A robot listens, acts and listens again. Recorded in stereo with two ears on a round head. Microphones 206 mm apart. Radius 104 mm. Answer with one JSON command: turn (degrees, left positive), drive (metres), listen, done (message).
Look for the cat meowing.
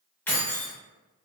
{"listen": true}
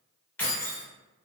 {"listen": true}
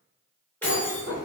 {"turn": 30}
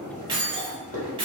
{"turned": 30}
{"turn": 140}
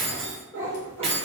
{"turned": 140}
{"turn": 10}
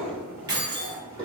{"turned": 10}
{"done": "Facing the cat meowing."}